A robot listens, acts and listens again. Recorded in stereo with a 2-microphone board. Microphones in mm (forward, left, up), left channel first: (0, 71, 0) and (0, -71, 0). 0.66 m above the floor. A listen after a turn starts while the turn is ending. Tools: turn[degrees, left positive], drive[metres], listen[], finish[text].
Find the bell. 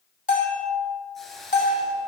Thought: The bell: about 60° left or 120° left.
Action: turn[60]
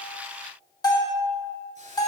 Thought: So it is at 30° left.
Action: turn[30]
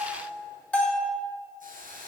Thought: The bell is now 10° left.
Action: turn[10]
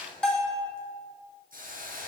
Action: finish[Facing the bell, 2 to 4 m away.]